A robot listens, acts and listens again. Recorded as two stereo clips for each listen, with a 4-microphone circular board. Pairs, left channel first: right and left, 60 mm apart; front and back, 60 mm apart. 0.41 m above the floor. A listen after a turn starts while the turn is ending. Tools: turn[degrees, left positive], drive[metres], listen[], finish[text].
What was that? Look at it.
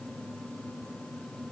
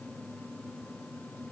Action: listen[]
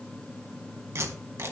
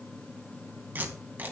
Thought: The tape being pulled: 125° left.
Action: turn[125]
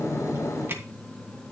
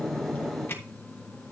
Thought: The tape being pulled is now 45° left.
Action: turn[45]
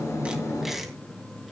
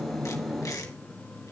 Action: finish[Found it: tape being pulled, straight ahead, 2 to 4 m away.]